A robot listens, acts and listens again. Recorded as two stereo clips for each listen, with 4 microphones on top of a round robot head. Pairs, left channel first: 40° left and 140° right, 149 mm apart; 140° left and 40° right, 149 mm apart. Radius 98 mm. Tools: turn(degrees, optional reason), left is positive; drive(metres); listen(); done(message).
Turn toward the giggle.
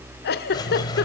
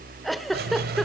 turn(degrees=50, reason="The giggle: 50° left.")
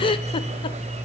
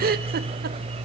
turn(degrees=-20, reason="The giggle is now 20° right.")
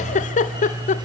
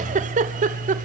done("Facing the giggle, 1 to 2 m away.")